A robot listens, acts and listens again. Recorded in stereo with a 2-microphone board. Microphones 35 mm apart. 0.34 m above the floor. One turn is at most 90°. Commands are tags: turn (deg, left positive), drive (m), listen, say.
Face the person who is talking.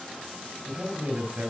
<turn deg="-50"/>
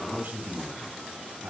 <turn deg="-70"/>
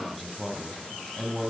<say>Found it: a man speaking, straight ahead, 2 to 4 m away.</say>